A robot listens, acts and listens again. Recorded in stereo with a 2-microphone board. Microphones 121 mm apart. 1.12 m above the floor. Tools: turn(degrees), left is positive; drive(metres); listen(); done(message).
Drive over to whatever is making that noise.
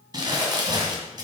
turn(degrees=-35)
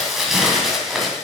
drive(metres=1.0)
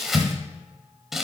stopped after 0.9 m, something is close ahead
done("I am next to the crumpling.")